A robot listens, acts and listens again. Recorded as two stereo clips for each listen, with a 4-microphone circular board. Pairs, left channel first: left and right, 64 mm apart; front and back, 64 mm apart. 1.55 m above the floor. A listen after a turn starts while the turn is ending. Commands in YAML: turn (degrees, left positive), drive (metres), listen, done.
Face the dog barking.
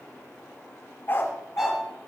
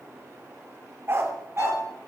turn: 135
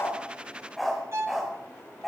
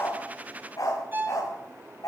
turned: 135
done: "Facing the dog barking."